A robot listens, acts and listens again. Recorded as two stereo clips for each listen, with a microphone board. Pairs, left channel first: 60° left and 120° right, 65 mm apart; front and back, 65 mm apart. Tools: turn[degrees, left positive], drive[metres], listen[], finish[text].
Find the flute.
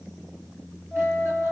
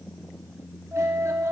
Thought: The flute: 140° left.
Action: turn[140]
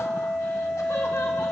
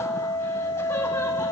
Thought: The flute is now 25° right.
Action: turn[-25]
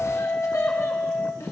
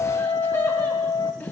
Action: finish[Found it: a flute, straight ahead.]